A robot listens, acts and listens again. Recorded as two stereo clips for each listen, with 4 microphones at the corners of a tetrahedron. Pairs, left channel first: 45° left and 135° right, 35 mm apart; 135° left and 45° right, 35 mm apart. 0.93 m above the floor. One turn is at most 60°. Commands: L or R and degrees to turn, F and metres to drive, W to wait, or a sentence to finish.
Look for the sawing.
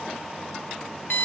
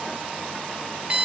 W
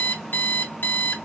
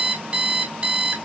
W
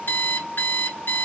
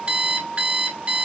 I can't make out sawing to turn to.